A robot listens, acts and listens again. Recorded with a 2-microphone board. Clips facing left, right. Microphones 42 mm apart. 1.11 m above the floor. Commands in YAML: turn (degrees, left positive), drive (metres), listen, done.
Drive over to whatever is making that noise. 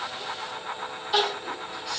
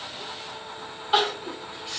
turn: -40
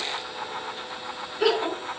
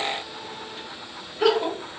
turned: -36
drive: 1.0
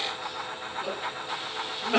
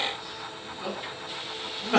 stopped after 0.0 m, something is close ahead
done: "Blocked. The crying is further on, straight ahead."